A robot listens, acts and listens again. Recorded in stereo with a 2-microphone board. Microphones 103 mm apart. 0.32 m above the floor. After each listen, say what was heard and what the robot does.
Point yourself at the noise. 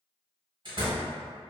The door slam: about 50° right or 130° right. Turn 50° right.
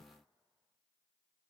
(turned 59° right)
Keep listening.
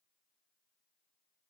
I heard a door slam, but can't make it out now. It was about 10° left or 70° right.